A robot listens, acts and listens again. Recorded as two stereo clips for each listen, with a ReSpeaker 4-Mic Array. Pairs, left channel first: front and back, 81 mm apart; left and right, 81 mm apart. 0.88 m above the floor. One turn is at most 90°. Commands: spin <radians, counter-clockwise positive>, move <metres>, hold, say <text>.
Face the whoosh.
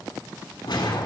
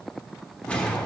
spin 0.17
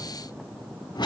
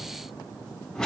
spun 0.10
say Facing the whoosh.